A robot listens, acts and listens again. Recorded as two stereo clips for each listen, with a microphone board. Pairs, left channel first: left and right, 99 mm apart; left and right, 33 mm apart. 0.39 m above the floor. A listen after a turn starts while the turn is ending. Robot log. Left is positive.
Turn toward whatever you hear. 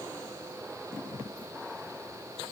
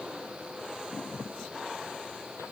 cmd idle
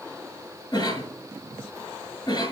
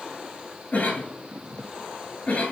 note: The cough: about 50° left or 130° left.
cmd yaw +50
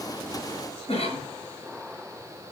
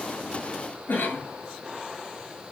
note: So it is at 80° left.
cmd yaw +80
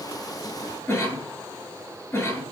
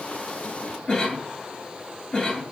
note: The cough is now 20° left.
cmd yaw +20
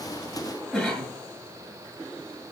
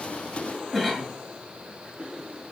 end: Facing the cough.